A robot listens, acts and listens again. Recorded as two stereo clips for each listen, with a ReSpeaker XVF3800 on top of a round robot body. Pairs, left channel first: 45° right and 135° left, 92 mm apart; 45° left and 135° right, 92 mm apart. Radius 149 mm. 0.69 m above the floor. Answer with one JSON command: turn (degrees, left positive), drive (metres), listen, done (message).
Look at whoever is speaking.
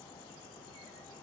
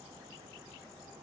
{"listen": true}
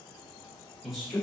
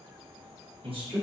{"turn": -135}
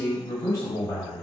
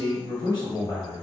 {"done": "Facing the man speaking."}